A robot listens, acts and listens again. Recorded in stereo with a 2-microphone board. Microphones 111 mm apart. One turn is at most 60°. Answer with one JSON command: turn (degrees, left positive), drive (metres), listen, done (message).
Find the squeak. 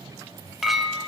{"listen": true}
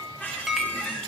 {"turn": 15}
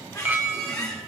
{"turn": 60}
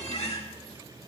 {"turn": 60}
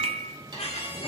{"turn": 60}
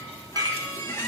{"turn": 25}
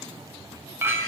{"listen": true}
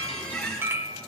{"turn": 10}
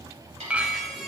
{"done": "Found it: a squeak, straight ahead."}